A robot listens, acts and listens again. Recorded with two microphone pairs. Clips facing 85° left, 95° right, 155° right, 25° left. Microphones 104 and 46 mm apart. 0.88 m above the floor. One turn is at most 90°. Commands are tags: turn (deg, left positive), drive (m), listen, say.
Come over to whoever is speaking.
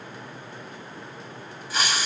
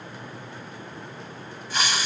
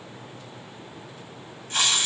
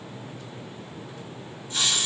<listen/>
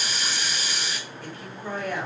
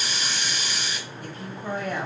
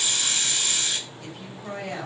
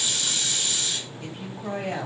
<turn deg="-35"/>
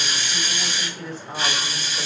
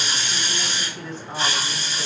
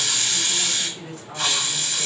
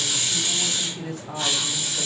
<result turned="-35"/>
<drive m="1.0"/>
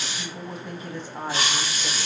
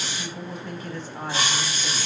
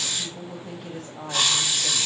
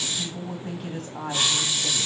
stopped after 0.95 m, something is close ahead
<turn deg="15"/>
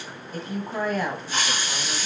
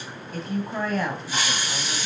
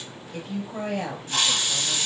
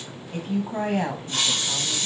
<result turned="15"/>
<say>Arrived at the woman speaking, straight ahead.</say>